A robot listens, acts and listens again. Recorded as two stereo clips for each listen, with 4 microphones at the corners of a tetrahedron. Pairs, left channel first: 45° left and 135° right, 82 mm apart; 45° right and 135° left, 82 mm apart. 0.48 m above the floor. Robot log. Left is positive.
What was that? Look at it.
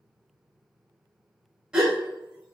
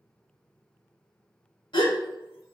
note: The gasp: 55° right.
cmd yaw -55
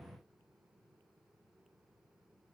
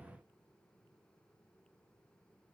end: I heard a gasp from this way, but can't make it out now.